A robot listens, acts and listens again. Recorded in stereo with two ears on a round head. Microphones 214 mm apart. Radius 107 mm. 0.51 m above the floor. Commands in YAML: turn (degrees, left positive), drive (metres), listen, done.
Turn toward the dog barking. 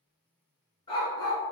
turn: 15
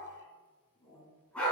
turn: 30
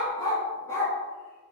turn: 30
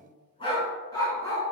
turn: 30
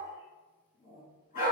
turn: 140
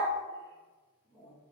turn: -10
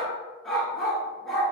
done: "Facing the dog barking, 1 to 2 m away."